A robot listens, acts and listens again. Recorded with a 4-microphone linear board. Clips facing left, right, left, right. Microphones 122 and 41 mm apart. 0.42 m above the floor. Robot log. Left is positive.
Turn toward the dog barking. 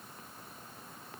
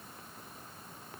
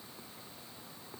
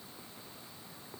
cmd idle
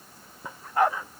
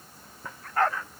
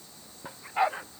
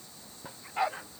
note: The dog barking: about 15° left or 165° left.
cmd yaw +15
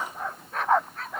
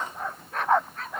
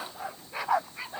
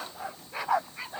cmd yaw +30
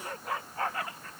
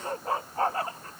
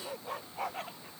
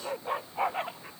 note: So it is at 30° right.
cmd yaw -30
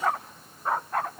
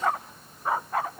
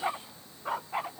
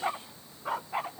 end: Facing the dog barking.